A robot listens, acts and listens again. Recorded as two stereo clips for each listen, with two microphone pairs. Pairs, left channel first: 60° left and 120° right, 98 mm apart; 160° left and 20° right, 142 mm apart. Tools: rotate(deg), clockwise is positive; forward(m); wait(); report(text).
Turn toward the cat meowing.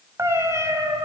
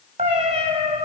rotate(65)
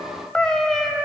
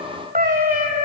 rotate(30)
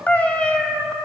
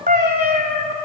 rotate(25)
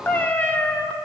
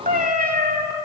rotate(15)
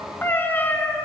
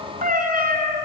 rotate(10)
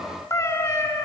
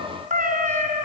report("Found it: a cat meowing, straight ahead.")